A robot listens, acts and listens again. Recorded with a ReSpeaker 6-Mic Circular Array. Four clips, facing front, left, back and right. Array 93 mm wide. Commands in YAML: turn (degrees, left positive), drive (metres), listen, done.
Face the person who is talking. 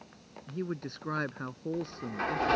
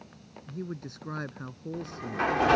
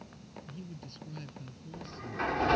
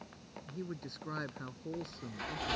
turn: 10
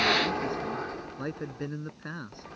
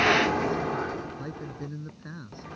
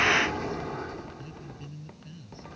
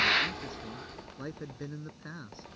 done: "Facing the man speaking."